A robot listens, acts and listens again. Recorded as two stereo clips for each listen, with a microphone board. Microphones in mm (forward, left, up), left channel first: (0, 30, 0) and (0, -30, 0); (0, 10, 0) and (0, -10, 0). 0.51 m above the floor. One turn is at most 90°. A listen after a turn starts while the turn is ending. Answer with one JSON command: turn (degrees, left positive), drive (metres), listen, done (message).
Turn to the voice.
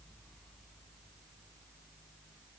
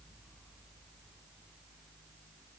{"listen": true}
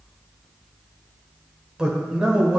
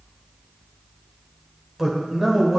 {"turn": -30}
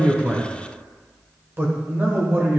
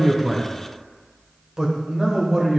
{"turn": -90}
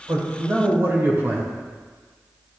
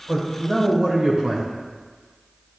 {"turn": -45}
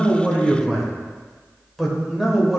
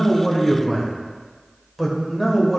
{"done": "Facing the man speaking, 1 to 2 m away."}